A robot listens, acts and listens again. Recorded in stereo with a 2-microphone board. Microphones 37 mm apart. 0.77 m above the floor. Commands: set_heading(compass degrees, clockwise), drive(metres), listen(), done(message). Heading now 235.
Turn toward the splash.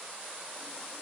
listen()
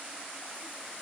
listen()
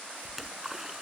set_heading(265)
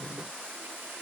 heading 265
listen()
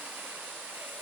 done("I heard a splash, but can't make it out now. It was about 20° left or 140° right.")